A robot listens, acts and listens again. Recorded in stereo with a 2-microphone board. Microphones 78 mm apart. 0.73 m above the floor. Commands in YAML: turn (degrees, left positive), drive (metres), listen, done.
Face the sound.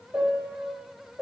turn: -20
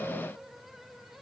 listen: true
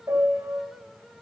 turn: -140
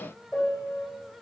done: "Facing the piano."